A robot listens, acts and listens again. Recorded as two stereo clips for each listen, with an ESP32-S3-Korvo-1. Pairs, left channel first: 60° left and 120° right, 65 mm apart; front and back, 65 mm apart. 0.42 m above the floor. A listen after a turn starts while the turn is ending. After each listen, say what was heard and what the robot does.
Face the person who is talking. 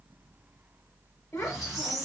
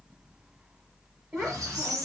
The child speaking: 115° left. Turn 115° left.
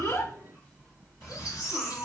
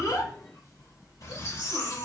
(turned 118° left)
Keep listening.
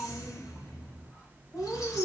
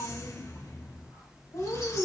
Facing the child speaking.